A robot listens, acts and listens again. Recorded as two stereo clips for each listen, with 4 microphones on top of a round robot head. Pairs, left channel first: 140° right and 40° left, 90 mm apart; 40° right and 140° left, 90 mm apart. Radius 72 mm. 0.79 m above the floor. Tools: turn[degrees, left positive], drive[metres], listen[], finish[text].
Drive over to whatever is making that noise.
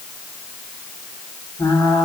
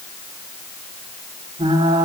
Thought: The frying: 165° left.
Action: turn[165]
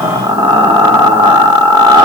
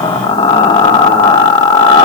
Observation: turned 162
Action: drive[1.0]
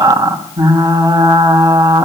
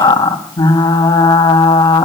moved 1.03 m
Action: drive[1.0]
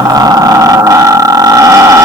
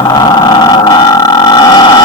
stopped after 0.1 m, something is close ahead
Action: finish[I am next to the frying.]